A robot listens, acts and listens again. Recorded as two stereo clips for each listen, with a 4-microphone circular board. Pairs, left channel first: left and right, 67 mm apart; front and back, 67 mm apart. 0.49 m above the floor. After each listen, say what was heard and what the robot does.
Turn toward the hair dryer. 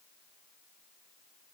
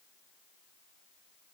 Keep listening.
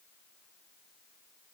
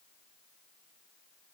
Keep listening.
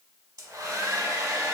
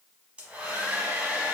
The hair dryer: 105° right. Turn 105° right.
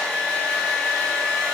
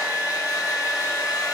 The hair dryer is now 15° left. Turn 15° left.
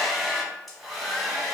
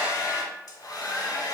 Found it: a hair dryer, straight ahead.